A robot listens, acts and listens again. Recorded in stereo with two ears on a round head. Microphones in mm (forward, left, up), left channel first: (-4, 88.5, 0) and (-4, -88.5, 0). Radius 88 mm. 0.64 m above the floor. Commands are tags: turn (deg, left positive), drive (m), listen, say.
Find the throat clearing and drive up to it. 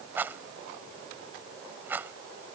<listen/>
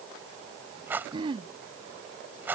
<turn deg="-25"/>
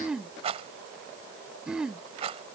<drive m="1.0"/>
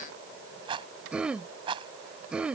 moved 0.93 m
<drive m="1.0"/>
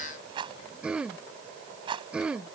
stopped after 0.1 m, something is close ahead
<say>Arrived at the throat clearing, straight ahead.</say>